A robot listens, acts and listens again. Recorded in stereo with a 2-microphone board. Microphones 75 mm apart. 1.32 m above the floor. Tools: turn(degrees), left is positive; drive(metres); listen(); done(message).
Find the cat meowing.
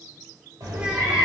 turn(degrees=-50)
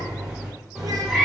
done("Found it: a cat meowing, straight ahead.")